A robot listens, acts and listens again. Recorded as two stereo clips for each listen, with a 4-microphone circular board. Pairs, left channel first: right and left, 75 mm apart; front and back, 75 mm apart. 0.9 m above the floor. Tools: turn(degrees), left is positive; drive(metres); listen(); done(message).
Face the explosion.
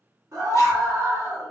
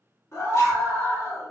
listen()
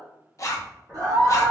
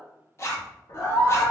turn(degrees=20)
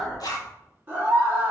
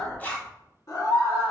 done("Facing the explosion.")